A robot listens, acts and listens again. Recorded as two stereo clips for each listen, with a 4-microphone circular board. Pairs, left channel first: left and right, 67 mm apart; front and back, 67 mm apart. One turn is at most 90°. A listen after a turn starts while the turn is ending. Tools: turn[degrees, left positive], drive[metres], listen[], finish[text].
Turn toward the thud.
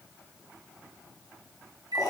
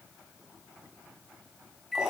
Action: listen[]
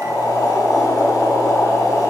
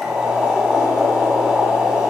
Action: listen[]
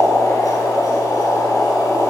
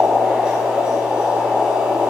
Action: finish[I can't make out a thud to turn to.]